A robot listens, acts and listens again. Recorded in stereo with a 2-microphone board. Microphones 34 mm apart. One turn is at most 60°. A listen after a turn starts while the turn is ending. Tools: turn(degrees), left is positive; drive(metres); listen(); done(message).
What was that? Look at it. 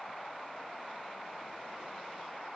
listen()
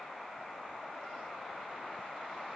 listen()
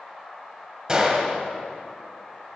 turn(degrees=-25)
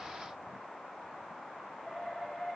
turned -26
listen()
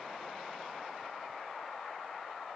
done("I heard a gunshot, but can't make it out now. It was about straight ahead or 130° right.")